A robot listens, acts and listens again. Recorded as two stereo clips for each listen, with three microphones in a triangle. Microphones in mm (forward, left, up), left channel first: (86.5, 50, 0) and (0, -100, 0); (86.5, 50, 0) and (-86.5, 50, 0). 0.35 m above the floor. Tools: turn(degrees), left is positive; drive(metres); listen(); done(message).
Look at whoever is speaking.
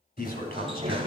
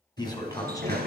turn(degrees=65)
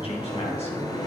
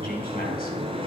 turn(degrees=10)
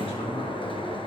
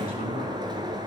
turn(degrees=10)
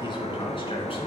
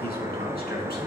listen()
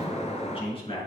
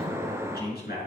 done("Found it: a man speaking, straight ahead.")